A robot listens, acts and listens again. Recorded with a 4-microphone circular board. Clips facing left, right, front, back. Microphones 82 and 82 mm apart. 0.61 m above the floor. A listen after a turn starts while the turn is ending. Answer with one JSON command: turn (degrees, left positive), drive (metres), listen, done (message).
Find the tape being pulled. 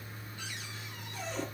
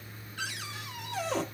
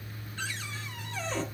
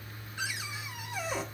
{"listen": true}
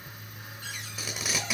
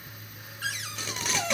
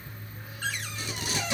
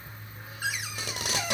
{"turn": 175}
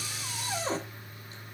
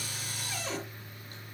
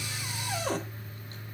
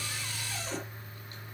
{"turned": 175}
{"listen": true}
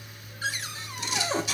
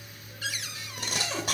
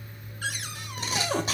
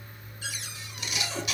{"turn": -50}
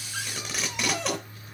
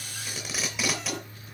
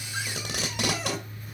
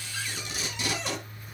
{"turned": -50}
{"done": "Found it: tape being pulled, straight ahead, 2 to 4 m away."}